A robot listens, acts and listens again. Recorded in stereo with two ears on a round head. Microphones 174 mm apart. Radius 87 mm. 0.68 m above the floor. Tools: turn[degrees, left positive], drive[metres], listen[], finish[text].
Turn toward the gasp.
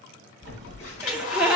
Action: turn[-30]
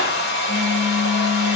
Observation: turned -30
Action: listen[]
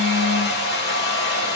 Action: finish[I heard a gasp, but can't make it out now. It was about 25° left or 145° right.]